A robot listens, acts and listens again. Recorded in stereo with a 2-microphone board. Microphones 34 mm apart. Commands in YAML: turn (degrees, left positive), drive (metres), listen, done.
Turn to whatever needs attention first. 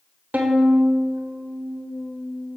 listen: true
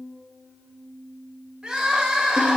turn: -30
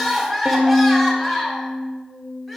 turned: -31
done: "Facing the crying, 1 to 2 m away."